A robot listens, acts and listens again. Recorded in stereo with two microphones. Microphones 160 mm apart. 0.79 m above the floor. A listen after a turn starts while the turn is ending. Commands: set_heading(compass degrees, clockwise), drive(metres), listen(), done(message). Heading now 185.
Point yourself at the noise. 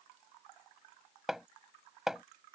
set_heading(155)
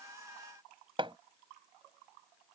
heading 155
set_heading(185)
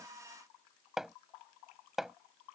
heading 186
done("Found it: hammering, straight ahead.")